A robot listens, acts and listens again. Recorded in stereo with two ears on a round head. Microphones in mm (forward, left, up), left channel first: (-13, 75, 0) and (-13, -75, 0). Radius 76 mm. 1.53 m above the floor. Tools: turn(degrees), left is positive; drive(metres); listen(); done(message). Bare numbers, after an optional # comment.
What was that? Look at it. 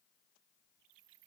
listen()
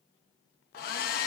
# The hair dryer: about 55° left or 125° left.
turn(55)
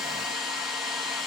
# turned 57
done("Found it: a hair dryer, straight ahead.")